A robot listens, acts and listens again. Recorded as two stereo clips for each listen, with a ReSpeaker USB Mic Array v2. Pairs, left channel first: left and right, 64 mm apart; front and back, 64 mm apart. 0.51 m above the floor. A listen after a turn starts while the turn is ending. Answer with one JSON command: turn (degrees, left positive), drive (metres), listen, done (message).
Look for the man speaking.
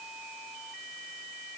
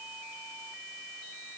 {"listen": true}
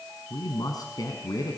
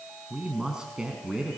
{"turn": 100}
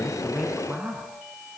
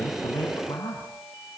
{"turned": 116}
{"turn": -20}
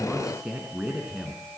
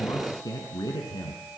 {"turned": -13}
{"turn": -10}
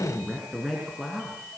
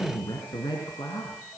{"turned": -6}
{"done": "Found it: a man speaking, straight ahead, over 4 m away."}